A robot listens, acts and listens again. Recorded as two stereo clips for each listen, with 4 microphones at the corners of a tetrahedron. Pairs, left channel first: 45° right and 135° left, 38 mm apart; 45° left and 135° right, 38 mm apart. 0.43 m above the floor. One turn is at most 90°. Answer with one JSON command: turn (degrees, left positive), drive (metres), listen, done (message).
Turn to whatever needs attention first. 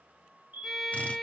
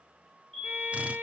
{"turn": 90}
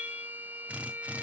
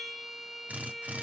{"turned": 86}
{"turn": 35}
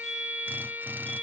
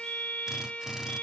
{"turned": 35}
{"done": "Found it: a fire alarm, straight ahead."}